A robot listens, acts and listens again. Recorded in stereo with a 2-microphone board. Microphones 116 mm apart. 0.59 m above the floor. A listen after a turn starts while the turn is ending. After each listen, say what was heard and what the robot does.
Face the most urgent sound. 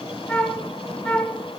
Keep listening.
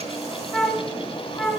Keep listening.
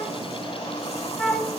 I can't make out anything urgent, only a flute.